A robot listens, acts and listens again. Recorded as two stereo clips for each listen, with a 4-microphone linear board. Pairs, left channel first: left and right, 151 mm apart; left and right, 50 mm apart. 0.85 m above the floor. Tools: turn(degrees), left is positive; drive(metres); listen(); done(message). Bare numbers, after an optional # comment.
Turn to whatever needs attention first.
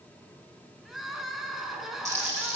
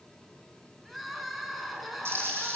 turn(30)
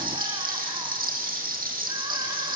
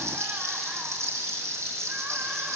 listen()
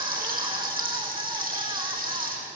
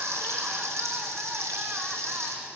listen()
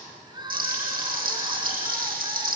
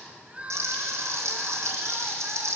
# So it is at 30° right.
turn(-30)
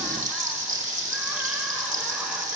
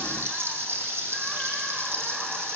listen()
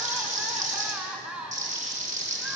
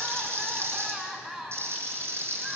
done("Found it: crying, straight ahead, 2 to 4 m away.")